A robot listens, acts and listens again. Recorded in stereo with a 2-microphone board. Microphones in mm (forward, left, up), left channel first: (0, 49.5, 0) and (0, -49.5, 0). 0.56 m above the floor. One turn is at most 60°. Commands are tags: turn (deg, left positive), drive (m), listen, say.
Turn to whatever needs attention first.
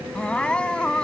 <turn deg="30"/>
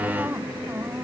<turn deg="-20"/>
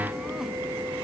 <listen/>
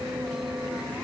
<listen/>
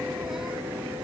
<say>Facing where the crying came from. I can't hear it now.</say>